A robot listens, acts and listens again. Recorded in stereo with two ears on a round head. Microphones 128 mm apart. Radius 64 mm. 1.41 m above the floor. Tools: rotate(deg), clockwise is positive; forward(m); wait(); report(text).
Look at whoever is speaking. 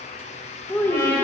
rotate(-30)
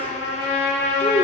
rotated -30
rotate(-135)
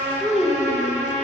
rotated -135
report("Found it: a child speaking, straight ahead, under 1 m away.")